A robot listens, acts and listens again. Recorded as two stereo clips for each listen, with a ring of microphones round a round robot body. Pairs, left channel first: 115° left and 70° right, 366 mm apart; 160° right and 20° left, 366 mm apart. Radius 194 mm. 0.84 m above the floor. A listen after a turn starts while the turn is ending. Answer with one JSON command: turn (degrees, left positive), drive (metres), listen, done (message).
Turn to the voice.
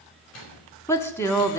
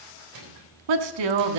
{"turn": 30}
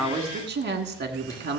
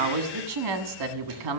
{"done": "Found it: a woman speaking, straight ahead, 1 to 2 m away."}